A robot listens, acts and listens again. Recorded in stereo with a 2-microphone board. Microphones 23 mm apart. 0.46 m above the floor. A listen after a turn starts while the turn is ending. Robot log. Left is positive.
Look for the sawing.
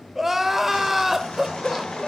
note: The sawing: about 60° left or 120° left.
cmd yaw +60
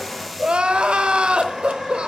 end: Facing the sawing, over 4 m away.